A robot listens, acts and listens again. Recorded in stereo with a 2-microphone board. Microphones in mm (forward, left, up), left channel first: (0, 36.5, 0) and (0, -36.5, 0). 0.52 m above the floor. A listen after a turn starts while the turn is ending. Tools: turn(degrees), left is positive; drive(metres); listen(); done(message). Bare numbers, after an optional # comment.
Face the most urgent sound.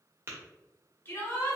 # The shout: about 30° left or 150° left.
turn(30)
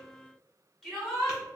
done("Found it: a shout, straight ahead, 1 to 2 m away.")